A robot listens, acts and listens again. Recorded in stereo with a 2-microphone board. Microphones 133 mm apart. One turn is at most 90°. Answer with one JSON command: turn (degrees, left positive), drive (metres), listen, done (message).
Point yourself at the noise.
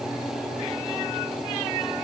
{"listen": true}
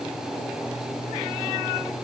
{"listen": true}
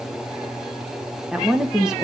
{"turn": -30}
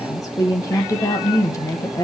{"turn": 25}
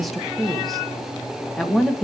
{"done": "Found it: a woman speaking, straight ahead, 1 to 2 m away."}